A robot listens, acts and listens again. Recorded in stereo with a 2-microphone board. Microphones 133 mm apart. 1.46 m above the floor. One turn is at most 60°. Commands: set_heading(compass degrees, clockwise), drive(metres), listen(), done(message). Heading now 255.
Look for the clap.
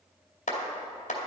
set_heading(195)
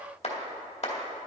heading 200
set_heading(145)
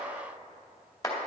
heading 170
set_heading(145)
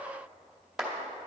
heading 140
done("Found it: a clap, straight ahead, 2 to 4 m away.")